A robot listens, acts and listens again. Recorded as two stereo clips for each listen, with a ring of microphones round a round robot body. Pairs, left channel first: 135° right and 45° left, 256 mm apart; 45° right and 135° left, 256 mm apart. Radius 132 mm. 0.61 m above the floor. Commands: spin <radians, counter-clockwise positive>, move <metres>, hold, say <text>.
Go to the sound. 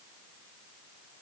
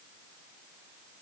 hold
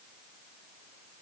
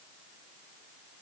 hold
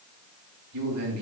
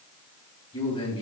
spin 0.44
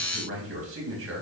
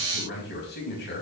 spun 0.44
move 1.0
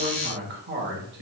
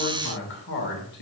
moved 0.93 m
move 1.0
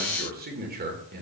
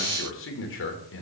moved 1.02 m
move 1.0
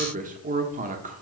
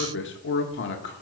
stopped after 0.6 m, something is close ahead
spin -0.17
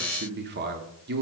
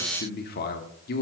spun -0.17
say I am next to the man speaking.